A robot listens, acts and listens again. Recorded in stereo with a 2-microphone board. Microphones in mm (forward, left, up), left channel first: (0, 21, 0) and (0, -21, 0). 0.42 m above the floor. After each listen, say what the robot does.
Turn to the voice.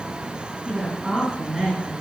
Turn 30° right.
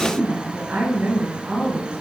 Turn 145° right.
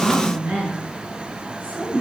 Turn 50° right.
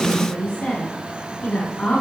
Turn 30° left.
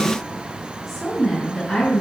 Found it: a woman speaking, straight ahead.